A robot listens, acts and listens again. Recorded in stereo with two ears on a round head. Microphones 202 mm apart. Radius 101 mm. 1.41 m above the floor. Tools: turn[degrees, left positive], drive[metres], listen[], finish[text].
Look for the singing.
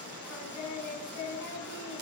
Thought: The singing: about 75° left or 105° left.
Action: turn[75]
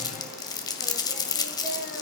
Action: listen[]
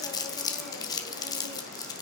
Action: listen[]
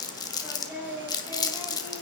Thought: So it is at 10° right.
Action: turn[-10]
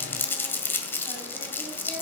Action: listen[]
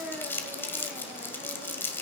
Action: finish[Facing the singing, over 4 m away.]